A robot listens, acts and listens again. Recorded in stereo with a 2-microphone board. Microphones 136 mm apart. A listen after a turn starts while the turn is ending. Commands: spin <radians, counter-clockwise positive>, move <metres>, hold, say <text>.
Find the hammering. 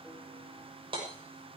spin -0.70
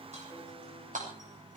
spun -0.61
spin -1.83
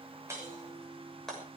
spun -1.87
say Found it: hammering, straight ahead.